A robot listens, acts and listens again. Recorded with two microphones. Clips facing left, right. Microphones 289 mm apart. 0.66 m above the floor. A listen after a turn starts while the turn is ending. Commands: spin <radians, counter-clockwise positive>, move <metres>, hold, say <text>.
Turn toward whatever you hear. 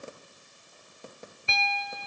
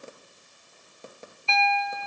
spin 0.35
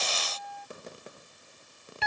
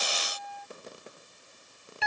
say Found it: a piano, straight ahead.